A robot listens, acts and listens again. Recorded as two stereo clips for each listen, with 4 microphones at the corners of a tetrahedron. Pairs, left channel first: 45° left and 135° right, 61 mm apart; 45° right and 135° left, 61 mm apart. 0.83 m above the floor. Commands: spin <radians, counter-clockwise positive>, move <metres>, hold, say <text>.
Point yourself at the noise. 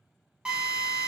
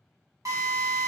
spin 2.62
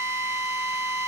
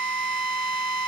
spin 0.52
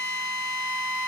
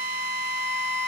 spin 0.17
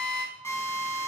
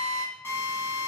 say Facing the drill, 1 to 2 m away.